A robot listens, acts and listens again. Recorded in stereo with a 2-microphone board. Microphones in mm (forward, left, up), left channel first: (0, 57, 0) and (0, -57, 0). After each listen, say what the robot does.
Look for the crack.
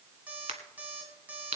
Turn 90° right.
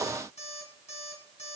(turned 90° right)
I heard a crack from this way, but can't make it out now.